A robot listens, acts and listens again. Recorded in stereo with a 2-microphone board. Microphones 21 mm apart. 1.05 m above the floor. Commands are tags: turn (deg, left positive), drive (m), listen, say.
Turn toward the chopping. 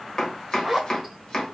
<turn deg="35"/>
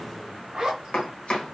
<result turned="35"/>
<turn deg="100"/>
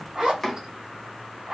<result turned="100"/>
<turn deg="15"/>
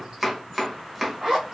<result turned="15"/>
<say>Facing the chopping.</say>